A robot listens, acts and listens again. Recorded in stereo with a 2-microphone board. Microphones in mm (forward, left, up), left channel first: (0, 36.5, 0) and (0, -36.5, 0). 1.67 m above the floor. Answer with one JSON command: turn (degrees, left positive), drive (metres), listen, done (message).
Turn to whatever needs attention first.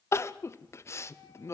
{"turn": 40}
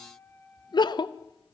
{"turn": 100}
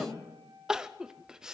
{"turn": -10}
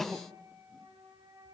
{"done": "Found it: crying, straight ahead, under 1 m away."}